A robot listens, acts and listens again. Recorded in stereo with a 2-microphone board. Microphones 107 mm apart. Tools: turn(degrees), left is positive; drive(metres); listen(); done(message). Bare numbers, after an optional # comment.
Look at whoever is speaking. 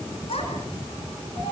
# The child speaking: about 70° left or 110° left.
turn(70)
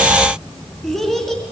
done("Facing the child speaking, over 4 m away.")